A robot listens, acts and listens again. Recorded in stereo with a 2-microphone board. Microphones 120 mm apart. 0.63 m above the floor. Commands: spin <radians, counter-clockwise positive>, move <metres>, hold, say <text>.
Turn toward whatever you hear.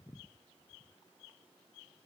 hold
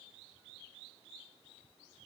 hold
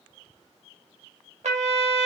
spin -1.31
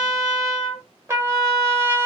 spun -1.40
spin -0.44
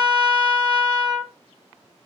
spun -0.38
say Facing the trumpet.